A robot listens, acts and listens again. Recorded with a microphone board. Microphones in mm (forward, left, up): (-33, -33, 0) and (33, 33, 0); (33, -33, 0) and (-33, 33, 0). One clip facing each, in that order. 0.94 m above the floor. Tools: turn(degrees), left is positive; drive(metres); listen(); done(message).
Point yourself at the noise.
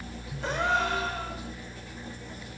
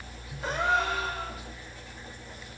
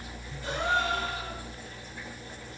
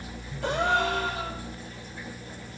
turn(degrees=130)
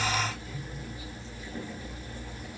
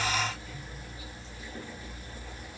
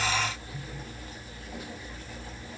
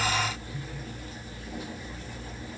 done("Facing where the gasp came from. I can't hear it now.")